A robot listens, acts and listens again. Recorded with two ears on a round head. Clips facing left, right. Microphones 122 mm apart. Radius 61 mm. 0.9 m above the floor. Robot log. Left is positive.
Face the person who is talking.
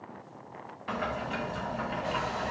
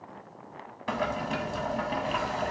cmd idle
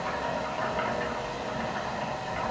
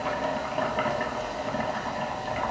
cmd idle
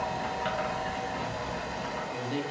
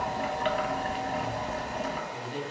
note: The man speaking: about 60° left or 120° left.
cmd yaw +60
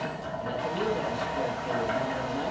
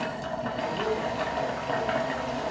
note: So it is at 50° left.
cmd yaw +50
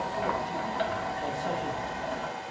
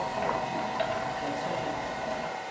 cmd idle
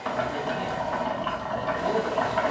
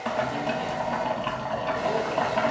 cmd idle
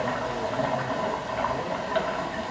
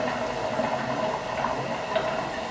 end: Facing where the man speaking came from. I can't hear it now.